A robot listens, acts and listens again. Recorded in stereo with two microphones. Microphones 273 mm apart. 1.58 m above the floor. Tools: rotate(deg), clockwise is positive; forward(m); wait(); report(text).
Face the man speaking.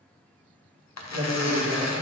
rotate(90)
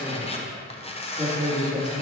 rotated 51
rotate(25)
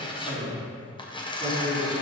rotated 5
rotate(15)
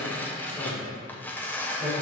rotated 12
report("Found it: a man speaking, straight ahead, 2 to 4 m away.")